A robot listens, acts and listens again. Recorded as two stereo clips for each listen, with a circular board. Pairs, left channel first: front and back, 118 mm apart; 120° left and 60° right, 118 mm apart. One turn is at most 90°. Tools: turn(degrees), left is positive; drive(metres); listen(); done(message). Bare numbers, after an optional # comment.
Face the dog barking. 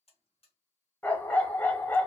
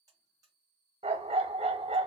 # The dog barking: 75° right.
turn(-75)
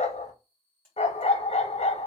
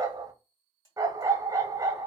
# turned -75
done("Found it: a dog barking, straight ahead, under 1 m away.")